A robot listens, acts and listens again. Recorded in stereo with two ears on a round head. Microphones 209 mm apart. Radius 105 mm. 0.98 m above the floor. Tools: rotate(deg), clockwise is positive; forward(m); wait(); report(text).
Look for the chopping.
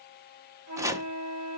rotate(30)
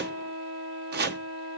rotate(135)
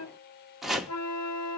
report("Facing the chopping.")